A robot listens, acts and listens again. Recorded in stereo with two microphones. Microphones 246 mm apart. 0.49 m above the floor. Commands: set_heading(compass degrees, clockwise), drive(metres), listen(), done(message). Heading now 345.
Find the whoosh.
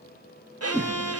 set_heading(15)
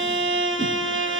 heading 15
listen()
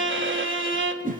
set_heading(160)
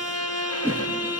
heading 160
set_heading(170)
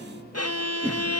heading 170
done("Facing the whoosh, 2 to 4 m away.")